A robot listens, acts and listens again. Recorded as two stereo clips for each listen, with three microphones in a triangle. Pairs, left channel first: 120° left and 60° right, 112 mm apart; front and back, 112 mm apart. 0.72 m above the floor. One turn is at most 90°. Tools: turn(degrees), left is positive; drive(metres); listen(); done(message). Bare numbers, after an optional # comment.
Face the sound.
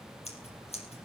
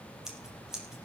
# The scissors: 95° left.
turn(90)
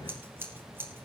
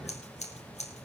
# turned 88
# The scissors is now 10° left.
turn(10)
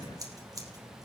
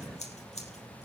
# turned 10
done("Found it: scissors, straight ahead.")